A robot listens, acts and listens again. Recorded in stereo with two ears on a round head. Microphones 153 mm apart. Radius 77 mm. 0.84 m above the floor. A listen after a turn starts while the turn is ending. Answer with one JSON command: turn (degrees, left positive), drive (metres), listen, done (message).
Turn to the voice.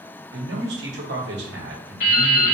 {"turn": -70}
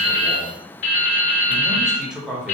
{"done": "Found it: a man speaking, straight ahead."}